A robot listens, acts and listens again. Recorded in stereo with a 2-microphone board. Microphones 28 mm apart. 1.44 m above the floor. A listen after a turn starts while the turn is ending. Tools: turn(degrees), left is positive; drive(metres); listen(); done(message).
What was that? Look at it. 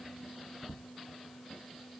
listen()
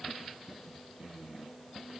listen()
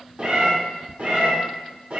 turn(degrees=-55)
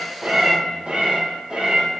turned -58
turn(degrees=-50)
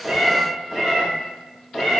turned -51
done("Found it: a cat meowing, straight ahead, 2 to 4 m away.")